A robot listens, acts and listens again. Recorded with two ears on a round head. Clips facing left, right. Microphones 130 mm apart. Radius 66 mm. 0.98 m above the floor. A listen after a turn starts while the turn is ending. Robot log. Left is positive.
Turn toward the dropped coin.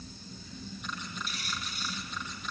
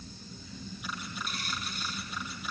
note: The dropped coin: about 45° right or 135° right.
cmd yaw -45
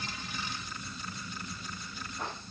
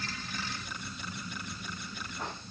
cmd idle
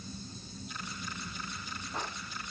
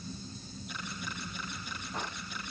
end: I heard a dropped coin, but can't make it out now. It was about straight ahead or 90° right.